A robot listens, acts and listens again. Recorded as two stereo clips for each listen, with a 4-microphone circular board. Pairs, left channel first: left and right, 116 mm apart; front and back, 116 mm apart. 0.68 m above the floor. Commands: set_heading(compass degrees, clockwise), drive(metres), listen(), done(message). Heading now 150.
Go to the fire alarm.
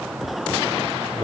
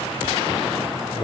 listen()
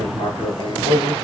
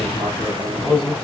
listen()
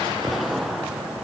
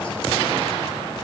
done("I can't make out a fire alarm, only writing.")